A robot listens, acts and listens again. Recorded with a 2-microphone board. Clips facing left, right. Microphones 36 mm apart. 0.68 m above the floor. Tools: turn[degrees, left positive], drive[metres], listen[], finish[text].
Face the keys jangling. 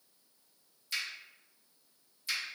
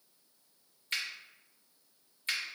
Action: listen[]
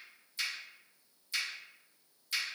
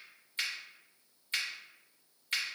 Action: listen[]
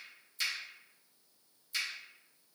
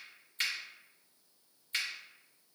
Action: finish[I can't make out keys jangling to turn to.]